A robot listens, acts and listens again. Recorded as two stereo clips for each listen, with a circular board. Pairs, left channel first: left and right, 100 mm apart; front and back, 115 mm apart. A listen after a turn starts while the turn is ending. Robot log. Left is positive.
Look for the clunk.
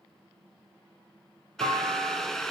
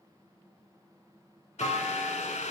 note: The clunk: 55° right.
cmd yaw -55
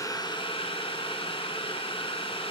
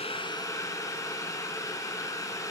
end: Facing where the clunk came from. I can't hear it now.